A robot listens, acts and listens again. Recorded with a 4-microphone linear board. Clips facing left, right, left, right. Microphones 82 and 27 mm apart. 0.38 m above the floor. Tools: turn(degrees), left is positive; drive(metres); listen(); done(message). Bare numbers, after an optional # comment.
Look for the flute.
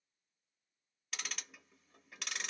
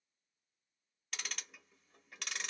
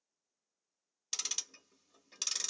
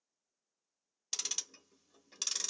listen()
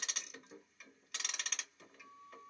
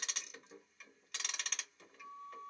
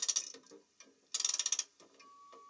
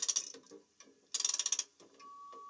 # The flute: about 50° right or 130° right.
turn(-50)
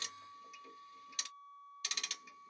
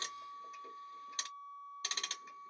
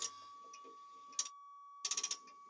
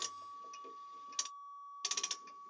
# So it is at 80° right.
turn(-80)
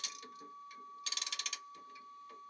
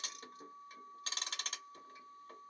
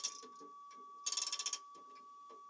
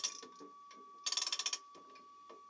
done("Found it: a flute, straight ahead.")